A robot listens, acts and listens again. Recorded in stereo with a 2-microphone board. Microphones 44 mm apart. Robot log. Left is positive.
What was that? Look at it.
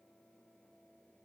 cmd idle
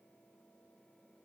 cmd idle
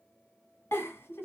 note: The giggle: about 70° left or 110° left.
cmd yaw +70
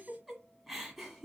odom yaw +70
end: Facing the giggle.